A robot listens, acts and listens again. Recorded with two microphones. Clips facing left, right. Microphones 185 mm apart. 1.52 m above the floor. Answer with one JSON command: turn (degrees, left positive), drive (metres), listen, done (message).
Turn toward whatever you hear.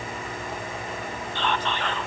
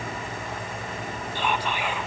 {"turn": -30}
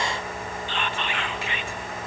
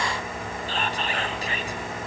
{"turn": -140}
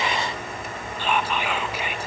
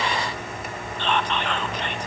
{"turn": 10}
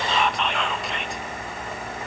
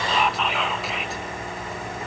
{"done": "Found it: whispering, straight ahead, 1 to 2 m away."}